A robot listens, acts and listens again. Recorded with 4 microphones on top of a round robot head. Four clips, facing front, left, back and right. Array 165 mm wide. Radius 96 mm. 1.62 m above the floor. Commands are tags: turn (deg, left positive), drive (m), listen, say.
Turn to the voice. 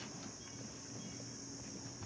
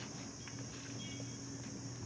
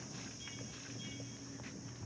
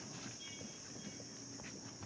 <listen/>
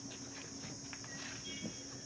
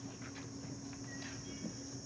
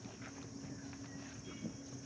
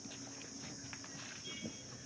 <listen/>
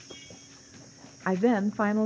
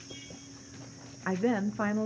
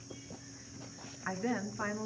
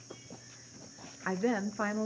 <turn deg="10"/>
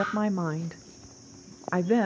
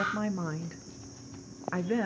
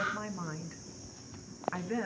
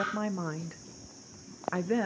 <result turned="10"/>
<say>Found it: a woman speaking, straight ahead, under 1 m away.</say>